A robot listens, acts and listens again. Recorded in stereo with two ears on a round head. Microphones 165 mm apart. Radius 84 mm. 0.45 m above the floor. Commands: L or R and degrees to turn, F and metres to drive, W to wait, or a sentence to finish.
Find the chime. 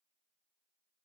W
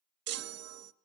R70
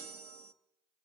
R40
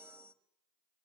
R10
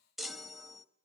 Facing the chime.